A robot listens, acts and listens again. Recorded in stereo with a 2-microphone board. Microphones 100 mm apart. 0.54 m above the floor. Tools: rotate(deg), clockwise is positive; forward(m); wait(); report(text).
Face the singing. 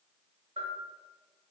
wait()
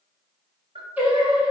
rotate(15)
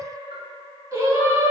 rotate(150)
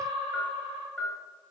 rotate(60)
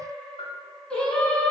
rotate(-15)
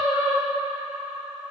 report("Facing the singing.")